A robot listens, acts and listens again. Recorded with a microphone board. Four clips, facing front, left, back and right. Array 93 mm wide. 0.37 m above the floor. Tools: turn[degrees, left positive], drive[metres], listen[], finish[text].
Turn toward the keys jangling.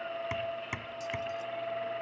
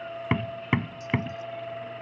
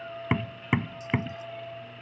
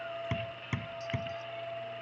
Action: listen[]
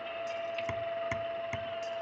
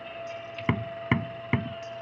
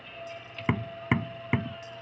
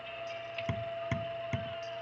Action: listen[]
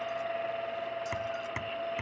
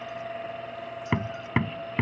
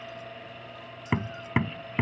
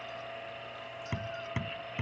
Action: finish[I can't make out keys jangling to turn to.]